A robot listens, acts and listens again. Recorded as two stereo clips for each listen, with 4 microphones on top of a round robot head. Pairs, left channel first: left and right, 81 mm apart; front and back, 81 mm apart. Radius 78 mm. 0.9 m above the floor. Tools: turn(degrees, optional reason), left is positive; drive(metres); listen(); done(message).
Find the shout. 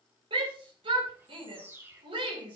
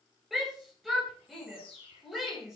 turn(degrees=-90, reason="The shout: 90° right.")
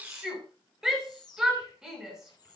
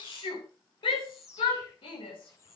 done("Facing the shout.")